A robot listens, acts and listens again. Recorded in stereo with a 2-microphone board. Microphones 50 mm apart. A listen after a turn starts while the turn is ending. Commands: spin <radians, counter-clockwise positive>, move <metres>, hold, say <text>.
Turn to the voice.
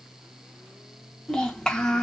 spin 0.52
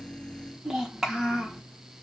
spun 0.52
spin -0.26
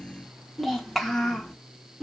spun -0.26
say Found it: a child speaking, straight ahead, under 1 m away.